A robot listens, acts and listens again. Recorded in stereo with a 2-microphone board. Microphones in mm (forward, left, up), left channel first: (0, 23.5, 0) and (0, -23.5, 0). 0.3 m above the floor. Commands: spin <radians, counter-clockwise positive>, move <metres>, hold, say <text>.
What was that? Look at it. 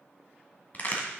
spin 0.70
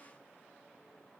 hold
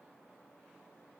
say I heard a crack, but can't make it out now. It was about straight ahead or 100° left.